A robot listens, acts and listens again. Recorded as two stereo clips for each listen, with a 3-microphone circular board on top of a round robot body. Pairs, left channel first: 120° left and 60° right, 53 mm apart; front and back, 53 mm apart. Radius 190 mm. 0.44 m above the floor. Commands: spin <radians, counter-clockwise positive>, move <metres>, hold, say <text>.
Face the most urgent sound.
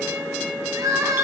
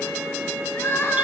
spin -0.79
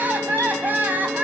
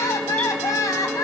say Facing the crying, 2 to 4 m away.